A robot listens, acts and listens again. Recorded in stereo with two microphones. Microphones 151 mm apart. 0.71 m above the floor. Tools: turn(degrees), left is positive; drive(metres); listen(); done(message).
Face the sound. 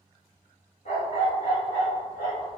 turn(degrees=75)
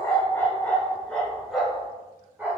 turn(degrees=-15)
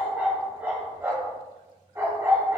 turn(degrees=-25)
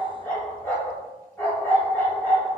turn(degrees=15)
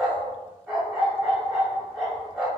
done("Found it: a dog barking, straight ahead.")